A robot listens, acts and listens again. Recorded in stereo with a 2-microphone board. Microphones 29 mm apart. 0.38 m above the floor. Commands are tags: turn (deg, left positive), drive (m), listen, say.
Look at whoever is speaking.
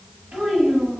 <turn deg="-65"/>
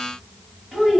<turn deg="-10"/>
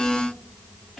<say>Facing the child speaking.</say>